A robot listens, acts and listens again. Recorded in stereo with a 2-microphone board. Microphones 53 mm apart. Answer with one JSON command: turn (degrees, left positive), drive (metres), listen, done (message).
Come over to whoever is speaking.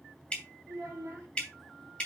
{"turn": -65}
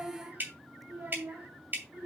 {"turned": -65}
{"turn": -50}
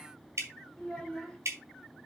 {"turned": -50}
{"drive": 1.0}
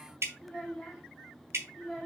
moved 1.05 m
{"drive": 1.0}
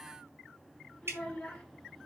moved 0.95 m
{"turn": 10}
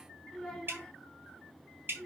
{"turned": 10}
{"drive": 1.0}
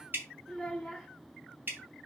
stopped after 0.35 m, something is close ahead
{"done": "I am next to the child speaking."}